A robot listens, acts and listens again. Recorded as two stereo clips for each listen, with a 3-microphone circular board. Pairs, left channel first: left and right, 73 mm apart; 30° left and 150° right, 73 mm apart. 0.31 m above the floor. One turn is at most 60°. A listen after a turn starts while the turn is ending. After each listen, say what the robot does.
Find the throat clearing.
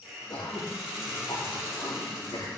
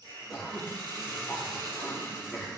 Turn 60° left.
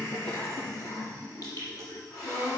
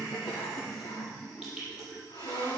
Turn 55° left.
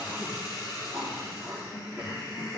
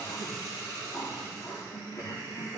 Turn 15° right.
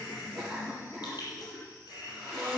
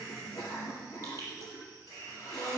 Facing the throat clearing.